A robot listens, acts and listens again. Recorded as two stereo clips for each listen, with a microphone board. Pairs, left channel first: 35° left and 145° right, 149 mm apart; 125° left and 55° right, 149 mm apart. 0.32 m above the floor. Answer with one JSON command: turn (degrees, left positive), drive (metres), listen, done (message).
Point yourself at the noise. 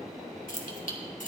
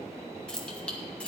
{"turn": 45}
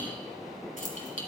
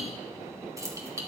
{"turn": 10}
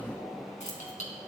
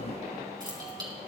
{"done": "Found it: keys jangling, straight ahead, 2 to 4 m away."}